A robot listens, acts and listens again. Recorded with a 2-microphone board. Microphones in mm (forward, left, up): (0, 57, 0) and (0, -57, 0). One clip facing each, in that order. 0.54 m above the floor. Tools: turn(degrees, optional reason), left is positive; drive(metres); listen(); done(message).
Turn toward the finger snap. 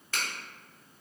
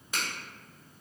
turn(degrees=-15, reason="The finger snap: about 15° right or 165° right.")
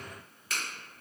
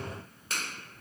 turn(degrees=-150, reason="So it is at 150° right.")
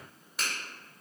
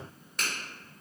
done("Found it: a finger snap, straight ahead, 1 to 2 m away.")